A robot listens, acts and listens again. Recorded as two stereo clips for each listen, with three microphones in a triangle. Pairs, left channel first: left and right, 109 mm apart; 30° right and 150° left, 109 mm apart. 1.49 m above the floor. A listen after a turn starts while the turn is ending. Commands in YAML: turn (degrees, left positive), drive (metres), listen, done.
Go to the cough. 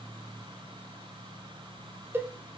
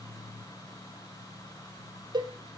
listen: true
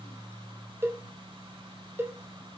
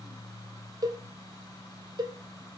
listen: true
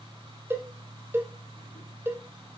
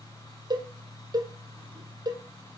done: "I can't make out a cough, only a cowbell."